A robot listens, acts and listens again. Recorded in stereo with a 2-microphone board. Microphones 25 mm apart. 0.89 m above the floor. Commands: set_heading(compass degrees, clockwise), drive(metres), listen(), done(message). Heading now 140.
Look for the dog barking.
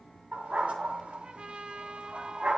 set_heading(185)
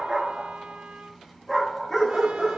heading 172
set_heading(162)
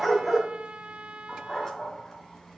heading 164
set_heading(144)
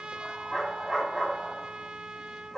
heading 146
done("Found it: a dog barking, straight ahead, 2 to 4 m away.")